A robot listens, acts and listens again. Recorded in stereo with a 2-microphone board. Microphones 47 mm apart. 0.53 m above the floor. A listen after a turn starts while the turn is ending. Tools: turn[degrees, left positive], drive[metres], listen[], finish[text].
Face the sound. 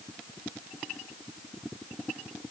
Action: listen[]
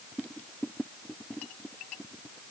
Action: listen[]
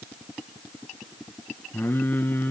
Thought: The singing: about 40° left or 140° left.
Action: turn[40]
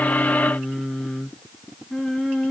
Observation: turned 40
Action: finish[Found it: singing, straight ahead, 2 to 4 m away.]